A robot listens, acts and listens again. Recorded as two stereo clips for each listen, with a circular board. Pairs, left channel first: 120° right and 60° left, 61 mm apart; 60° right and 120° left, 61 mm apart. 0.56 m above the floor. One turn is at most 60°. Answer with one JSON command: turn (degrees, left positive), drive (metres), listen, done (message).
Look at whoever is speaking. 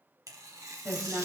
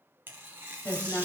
{"done": "Found it: a woman speaking, straight ahead, 2 to 4 m away."}